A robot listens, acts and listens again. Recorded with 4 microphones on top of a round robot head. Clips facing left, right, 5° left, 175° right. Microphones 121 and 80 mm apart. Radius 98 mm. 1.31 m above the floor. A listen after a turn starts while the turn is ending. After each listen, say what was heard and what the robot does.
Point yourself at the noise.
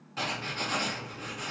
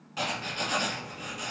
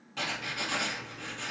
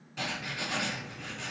The writing: 15° right. Turn 15° right.
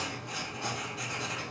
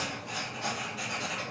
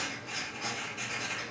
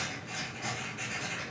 Facing the writing.